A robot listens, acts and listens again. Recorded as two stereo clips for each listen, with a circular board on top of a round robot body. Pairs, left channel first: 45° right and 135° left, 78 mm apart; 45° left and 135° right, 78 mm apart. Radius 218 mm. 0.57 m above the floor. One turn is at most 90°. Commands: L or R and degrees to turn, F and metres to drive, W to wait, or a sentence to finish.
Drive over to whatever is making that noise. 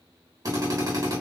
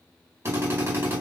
L90
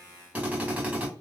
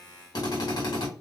L65
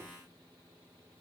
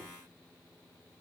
W
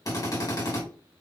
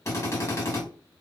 F1.0
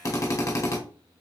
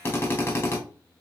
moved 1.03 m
F1.0
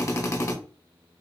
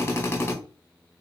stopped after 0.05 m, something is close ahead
Arrived at the drill, straight ahead.